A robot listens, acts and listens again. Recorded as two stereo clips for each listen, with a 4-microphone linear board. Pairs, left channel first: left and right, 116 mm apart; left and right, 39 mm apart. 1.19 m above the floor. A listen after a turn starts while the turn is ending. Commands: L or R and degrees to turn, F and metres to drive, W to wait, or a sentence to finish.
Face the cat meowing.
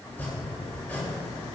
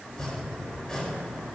W
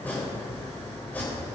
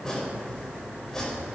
W
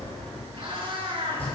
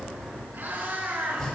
R50
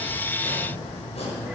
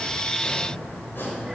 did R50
W
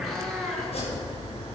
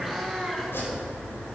Facing the cat meowing.